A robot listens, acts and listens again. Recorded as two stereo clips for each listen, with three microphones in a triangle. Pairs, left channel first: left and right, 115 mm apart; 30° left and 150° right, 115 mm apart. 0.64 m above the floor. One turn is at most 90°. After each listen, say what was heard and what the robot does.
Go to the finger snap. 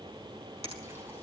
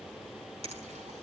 The finger snap: 120° right. Turn 90° right.
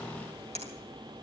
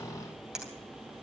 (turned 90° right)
The finger snap is now 65° right. Turn 65° right.
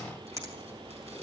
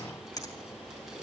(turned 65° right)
The finger snap is now 25° right. Turn 25° right.
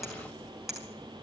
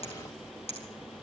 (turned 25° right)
Drive 1.0 m forward.
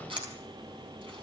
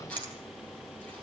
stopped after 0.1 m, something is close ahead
The finger snap is now 10° right. Turn 10° right.
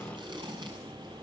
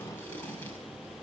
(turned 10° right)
Keep listening.
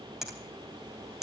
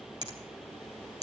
Something is in my way. I am facing the finger snap but have not reached it.